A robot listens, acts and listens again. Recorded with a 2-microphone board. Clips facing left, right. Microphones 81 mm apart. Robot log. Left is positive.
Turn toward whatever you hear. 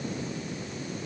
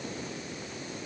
cmd idle
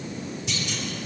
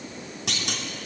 note: The clunk: about 75° right or 105° right.
cmd yaw -75
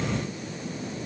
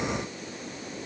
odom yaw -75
cmd idle
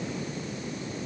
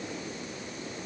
end: I heard a clunk, but can't make it out now. It was about straight ahead or 30° right.